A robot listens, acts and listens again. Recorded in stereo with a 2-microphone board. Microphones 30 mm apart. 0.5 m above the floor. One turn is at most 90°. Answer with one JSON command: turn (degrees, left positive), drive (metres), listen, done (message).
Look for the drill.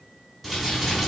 {"listen": true}
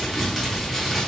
{"listen": true}
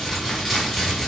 {"done": "I can't make out a drill to turn to."}